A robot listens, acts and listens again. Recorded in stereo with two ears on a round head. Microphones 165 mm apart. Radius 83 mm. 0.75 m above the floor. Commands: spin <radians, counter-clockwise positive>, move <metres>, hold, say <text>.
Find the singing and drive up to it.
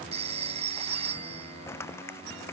hold
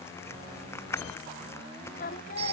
spin 0.79
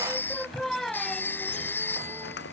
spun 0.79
move 1.0
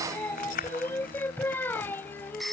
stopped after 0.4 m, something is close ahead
spin 0.17
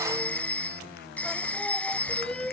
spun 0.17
say Something is in my way. I am facing the singing but have not reached it.